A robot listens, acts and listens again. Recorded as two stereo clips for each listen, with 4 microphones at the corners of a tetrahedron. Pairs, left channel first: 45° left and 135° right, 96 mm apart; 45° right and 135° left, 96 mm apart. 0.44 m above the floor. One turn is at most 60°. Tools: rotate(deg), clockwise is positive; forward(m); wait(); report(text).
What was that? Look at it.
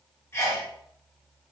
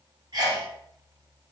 rotate(-60)
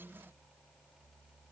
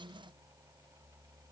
rotate(-45)
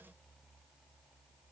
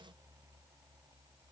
report("Facing where the sneeze came from. I can't hear it now.")